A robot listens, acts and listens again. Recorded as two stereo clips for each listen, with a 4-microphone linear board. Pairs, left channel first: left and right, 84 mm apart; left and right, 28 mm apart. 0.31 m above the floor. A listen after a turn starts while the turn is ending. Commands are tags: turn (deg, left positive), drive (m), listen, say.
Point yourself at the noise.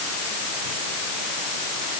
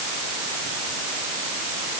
<listen/>
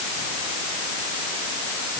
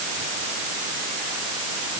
<listen/>
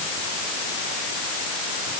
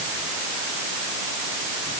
<say>I can't make out anything.</say>